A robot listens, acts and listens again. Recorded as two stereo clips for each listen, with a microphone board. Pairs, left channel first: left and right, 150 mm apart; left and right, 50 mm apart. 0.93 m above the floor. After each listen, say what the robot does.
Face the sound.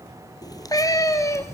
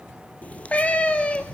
Turn 20° left.
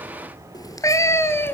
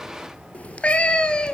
Turn 30° left.
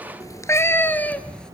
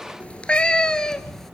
Turn 30° left.
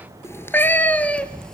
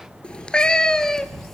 Turn 30° left.
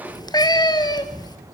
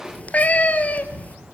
Turn 25° left.
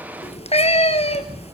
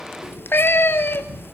Turn 135° left.
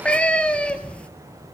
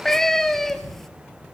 Facing the cat meowing, 1 to 2 m away.